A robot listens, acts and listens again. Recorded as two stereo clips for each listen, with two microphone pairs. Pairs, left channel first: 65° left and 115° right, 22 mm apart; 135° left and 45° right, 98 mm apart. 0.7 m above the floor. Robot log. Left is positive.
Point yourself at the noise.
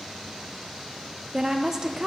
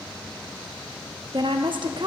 note: The woman speaking: 60° right.
cmd yaw -60
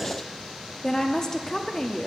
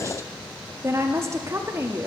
end: Facing the woman speaking, under 1 m away.